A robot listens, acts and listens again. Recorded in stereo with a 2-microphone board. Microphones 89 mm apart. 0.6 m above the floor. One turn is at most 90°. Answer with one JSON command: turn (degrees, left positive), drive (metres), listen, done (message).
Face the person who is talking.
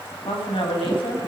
{"turn": 90}
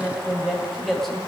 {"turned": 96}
{"done": "Facing the woman speaking, 2 to 4 m away."}